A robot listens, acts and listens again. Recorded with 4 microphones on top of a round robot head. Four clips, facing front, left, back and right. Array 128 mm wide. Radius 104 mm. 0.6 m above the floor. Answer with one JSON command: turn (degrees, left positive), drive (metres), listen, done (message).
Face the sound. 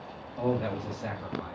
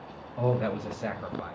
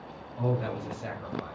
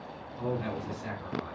{"turn": 90}
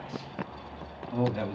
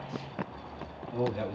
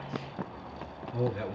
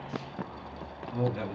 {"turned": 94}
{"done": "Found it: a man speaking, straight ahead, over 4 m away."}